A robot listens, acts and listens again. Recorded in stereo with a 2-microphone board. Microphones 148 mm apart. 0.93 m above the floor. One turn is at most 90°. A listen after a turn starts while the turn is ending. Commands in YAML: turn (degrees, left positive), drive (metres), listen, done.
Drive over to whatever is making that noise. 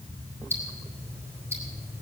turn: -15
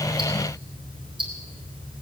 turn: -90
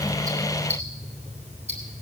turn: -45
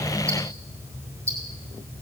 turn: -20
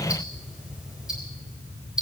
drive: 1.0
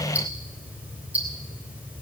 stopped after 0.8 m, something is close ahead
turn: -10
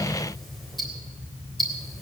done: "Something is in my way. I am facing the ticking but have not reached it."